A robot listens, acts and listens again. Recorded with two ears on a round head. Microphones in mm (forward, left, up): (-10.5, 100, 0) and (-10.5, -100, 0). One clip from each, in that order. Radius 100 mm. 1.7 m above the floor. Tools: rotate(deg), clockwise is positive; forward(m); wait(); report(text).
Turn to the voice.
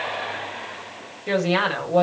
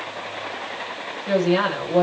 rotate(-70)
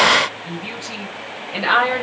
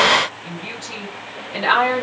report("Facing the woman speaking, over 4 m away.")